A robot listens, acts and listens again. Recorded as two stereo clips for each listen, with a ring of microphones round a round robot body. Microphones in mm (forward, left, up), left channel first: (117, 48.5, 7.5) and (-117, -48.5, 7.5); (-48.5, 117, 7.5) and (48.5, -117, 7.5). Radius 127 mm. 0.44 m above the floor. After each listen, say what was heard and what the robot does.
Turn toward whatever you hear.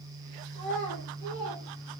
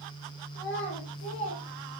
The child speaking: 65° left. Turn 65° left.
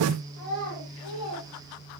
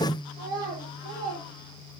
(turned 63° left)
Facing the child speaking.